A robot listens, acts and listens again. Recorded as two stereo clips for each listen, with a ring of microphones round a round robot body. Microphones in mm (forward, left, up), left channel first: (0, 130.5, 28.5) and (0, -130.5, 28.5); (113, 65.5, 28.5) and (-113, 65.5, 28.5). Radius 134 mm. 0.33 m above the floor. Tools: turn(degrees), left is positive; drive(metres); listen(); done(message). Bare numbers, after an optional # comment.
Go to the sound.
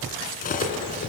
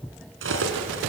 # The cutlery clinking: 150° left.
turn(150)
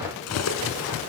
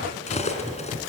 # The cutlery clinking is now 60° left.
turn(60)
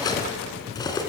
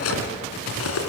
# The cutlery clinking is now 15° left.
turn(15)
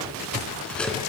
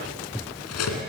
drive(1.0)
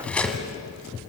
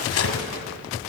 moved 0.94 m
drive(1.0)
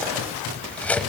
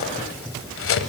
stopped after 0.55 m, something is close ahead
done("I am next to the cutlery clinking.")